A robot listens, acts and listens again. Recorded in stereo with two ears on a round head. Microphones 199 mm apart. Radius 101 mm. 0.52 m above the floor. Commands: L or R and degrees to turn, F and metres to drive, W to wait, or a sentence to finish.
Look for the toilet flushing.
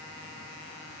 W
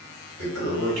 R55
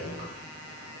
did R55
R35
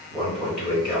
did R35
Facing the toilet flushing, 1 to 2 m away.